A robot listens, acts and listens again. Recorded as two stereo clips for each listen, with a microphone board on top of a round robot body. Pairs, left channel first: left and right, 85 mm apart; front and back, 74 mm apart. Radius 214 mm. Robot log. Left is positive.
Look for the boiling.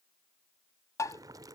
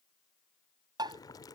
note: The boiling: 40° right.
cmd yaw -40
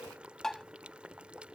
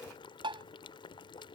note: The boiling is now 10° right.
cmd yaw -10
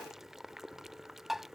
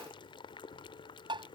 end: Found it: boiling, straight ahead.